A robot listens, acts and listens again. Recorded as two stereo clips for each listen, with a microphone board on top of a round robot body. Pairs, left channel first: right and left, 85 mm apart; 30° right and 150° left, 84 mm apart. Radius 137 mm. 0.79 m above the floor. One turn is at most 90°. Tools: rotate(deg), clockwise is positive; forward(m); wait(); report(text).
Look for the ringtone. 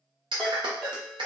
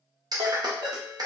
rotate(90)
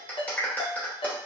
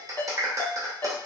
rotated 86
rotate(90)
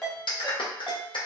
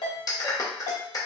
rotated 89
report("Facing the ringtone.")